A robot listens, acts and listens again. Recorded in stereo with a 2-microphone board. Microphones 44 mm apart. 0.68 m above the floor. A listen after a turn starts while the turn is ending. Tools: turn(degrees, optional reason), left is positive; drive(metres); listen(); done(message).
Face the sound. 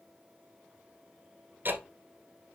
turn(degrees=-45, reason="The ticking: about 45° right or 135° right.")
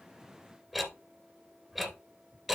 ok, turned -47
done("Found it: ticking, straight ahead, 1 to 2 m away.")